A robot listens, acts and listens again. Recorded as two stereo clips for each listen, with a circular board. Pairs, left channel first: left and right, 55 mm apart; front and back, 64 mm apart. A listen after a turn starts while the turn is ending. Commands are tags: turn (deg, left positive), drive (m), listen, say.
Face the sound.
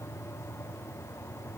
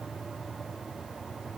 <listen/>
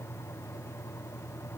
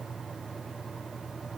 <listen/>
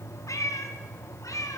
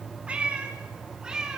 <turn deg="100"/>
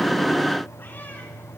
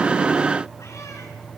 <listen/>
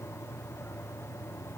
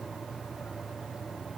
<listen/>
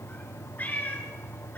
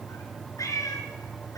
<turn deg="30"/>
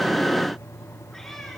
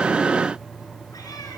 <listen/>
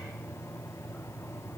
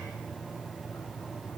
<listen/>
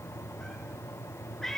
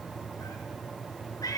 <say>Found it: a cat meowing, straight ahead.</say>